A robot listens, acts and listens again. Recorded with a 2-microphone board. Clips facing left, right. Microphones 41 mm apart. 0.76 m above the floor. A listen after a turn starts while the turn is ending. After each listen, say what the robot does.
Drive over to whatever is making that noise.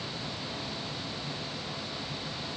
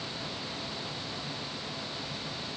Keep listening.
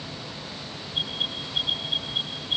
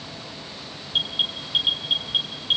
Turn 65° right.
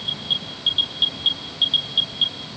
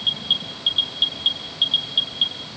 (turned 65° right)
Drive 1.0 m forward.
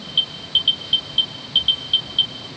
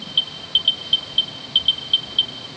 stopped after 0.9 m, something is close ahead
Something is in my way. I am facing the alarm but have not reached it.